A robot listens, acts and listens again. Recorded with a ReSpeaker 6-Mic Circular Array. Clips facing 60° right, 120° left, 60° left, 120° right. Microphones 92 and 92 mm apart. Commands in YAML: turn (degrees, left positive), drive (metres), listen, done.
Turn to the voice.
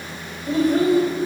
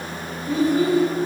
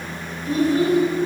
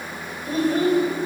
turn: -75
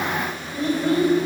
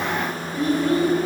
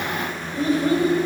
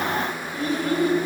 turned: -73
done: "Found it: a child speaking, straight ahead."